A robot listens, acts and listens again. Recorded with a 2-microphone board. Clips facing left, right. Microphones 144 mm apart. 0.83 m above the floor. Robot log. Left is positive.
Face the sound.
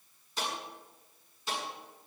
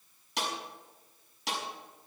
cmd yaw -90
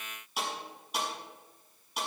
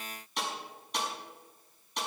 end: Found it: a snare drum, straight ahead, over 4 m away.